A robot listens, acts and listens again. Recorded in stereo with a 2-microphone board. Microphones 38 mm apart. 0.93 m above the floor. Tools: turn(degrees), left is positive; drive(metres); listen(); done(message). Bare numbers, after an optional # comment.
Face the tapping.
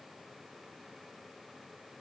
listen()
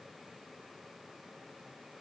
listen()
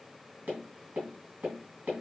# The tapping: about 40° right or 140° right.
turn(-40)
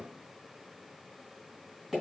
done("Facing the tapping.")